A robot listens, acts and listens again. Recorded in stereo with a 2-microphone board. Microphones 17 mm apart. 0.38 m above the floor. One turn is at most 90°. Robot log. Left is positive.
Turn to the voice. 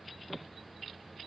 cmd idle
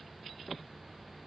cmd idle
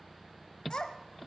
note: The child speaking: about 45° left or 135° left.
cmd yaw +45
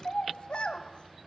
note: So it is at 80° left.
cmd yaw +80
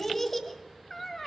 note: The child speaking is now 15° left.
cmd yaw +15
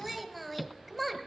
end: Found it: a child speaking, straight ahead.